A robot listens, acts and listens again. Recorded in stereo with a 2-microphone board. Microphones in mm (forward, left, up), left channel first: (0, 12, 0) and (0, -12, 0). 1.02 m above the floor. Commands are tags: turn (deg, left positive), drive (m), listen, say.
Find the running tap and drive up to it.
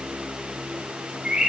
<listen/>
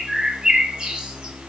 <listen/>
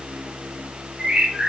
<say>I can't make out a running tap to turn to.</say>